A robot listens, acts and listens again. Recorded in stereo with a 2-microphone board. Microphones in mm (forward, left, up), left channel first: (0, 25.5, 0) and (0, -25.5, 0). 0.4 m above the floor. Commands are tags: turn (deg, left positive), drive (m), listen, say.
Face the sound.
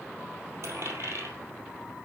<turn deg="-65"/>
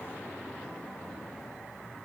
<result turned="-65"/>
<listen/>
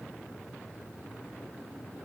<say>I heard a dropped coin, but can't make it out now. It was about straight ahead or 50° right.</say>